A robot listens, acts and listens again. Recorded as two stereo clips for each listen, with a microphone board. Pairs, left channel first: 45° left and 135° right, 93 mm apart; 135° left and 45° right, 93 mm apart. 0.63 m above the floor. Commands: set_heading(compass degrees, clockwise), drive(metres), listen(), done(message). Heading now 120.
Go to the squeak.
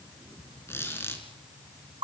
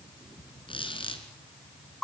set_heading(10)
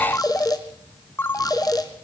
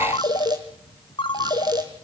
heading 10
listen()
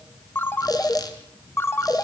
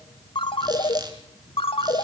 drive(1.0)
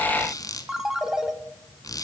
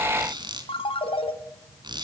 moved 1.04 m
drive(1.0)
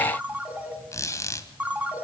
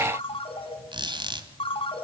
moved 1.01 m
set_heading(20)
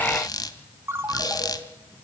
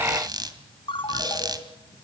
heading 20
drive(1.0)
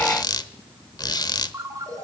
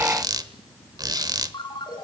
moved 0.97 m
drive(1.0)
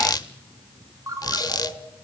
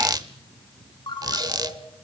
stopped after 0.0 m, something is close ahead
done("Arrived at the squeak, straight ahead.")